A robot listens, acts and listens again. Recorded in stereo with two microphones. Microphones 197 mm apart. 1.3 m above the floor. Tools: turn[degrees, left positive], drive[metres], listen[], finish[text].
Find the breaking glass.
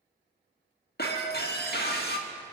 Thought: The breaking glass: about 55° left or 125° left.
Action: turn[55]
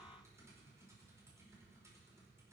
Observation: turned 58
Action: listen[]
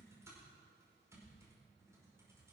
Action: finish[I heard breaking glass, but can't make it out now. It was about 5° right or 70° left.]